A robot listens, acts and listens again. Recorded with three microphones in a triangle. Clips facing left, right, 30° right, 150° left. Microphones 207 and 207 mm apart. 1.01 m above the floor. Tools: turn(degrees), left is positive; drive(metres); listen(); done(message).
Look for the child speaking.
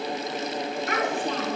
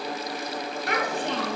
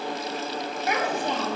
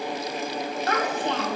turn(degrees=-105)
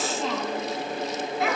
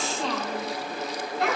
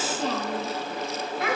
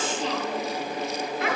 done("Found it: a child speaking, straight ahead.")